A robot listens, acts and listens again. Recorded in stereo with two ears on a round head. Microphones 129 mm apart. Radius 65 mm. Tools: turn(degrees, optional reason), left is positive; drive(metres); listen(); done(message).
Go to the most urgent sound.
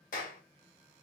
listen()
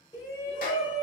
turn(degrees=30, reason="The shout: about 30° left or 150° left.")
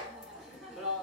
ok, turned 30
drive(metres=1.0)
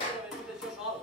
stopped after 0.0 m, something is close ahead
done("Something is in my way. I am facing the shout but have not reached it.")